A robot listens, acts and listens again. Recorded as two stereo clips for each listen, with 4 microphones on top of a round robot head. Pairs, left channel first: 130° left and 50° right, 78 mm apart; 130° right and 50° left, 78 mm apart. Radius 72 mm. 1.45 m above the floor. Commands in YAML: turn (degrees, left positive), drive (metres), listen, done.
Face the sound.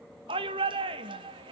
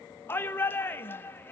turn: -70
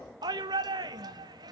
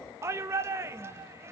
turn: -10
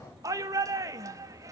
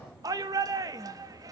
done: "Facing the shout, 1 to 2 m away."